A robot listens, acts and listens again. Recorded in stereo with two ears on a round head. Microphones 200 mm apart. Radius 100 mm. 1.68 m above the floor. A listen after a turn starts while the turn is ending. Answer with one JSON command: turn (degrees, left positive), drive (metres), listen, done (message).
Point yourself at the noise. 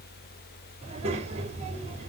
{"turn": -30}
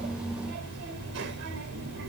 {"turn": -120}
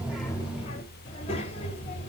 {"turn": 30}
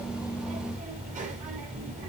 {"turn": -35}
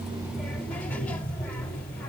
{"done": "Facing the child speaking."}